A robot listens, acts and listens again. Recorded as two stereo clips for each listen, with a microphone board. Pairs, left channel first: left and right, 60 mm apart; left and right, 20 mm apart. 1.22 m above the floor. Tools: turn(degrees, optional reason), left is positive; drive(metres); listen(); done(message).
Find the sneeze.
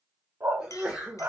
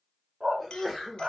turn(degrees=-15, reason="The sneeze: about 15° right or 165° right.")
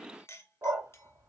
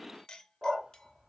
listen()
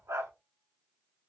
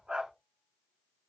done("I heard a sneeze, but can't make it out now. It was about straight ahead or 150° right.")